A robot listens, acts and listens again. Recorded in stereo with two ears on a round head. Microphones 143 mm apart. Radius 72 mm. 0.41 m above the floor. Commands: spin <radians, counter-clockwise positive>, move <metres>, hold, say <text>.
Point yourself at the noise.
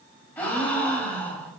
spin 0.52
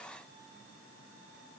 hold
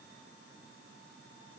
say I heard a gasp, but can't make it out now. It was about 20° right or 140° left.